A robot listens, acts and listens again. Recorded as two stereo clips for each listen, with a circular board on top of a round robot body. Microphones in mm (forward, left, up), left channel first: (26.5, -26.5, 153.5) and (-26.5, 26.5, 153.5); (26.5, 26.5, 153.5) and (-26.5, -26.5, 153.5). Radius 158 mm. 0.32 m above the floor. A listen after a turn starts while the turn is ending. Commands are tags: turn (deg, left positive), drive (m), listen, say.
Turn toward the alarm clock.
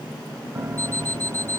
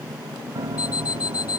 <turn deg="15"/>
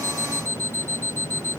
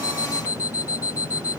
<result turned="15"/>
<say>Found it: an alarm clock, straight ahead.</say>